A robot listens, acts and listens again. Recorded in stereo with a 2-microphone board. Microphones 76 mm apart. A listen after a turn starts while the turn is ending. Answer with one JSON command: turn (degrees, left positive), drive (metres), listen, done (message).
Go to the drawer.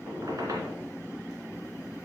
{"listen": true}
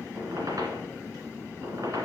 {"listen": true}
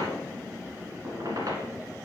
{"done": "I can't make out a drawer to turn to."}